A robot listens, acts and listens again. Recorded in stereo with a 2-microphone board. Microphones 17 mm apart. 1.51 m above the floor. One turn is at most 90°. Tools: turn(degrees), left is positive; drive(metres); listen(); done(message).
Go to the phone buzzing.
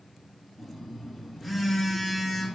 turn(degrees=30)
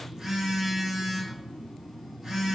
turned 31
turn(degrees=-20)
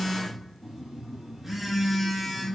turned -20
drive(metres=1.0)
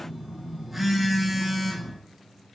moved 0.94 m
drive(metres=1.0)
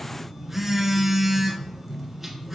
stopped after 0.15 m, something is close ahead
turn(degrees=-10)
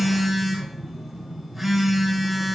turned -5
done("Arrived at the phone buzzing, straight ahead.")